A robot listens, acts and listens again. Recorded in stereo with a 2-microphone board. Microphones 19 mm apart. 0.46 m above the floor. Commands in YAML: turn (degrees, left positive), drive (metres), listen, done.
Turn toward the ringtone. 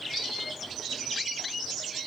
listen: true
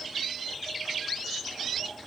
listen: true
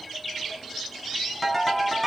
turn: 30
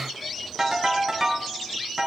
turn: -25
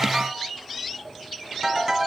turn: -15
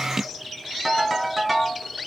done: "Found it: a ringtone, straight ahead."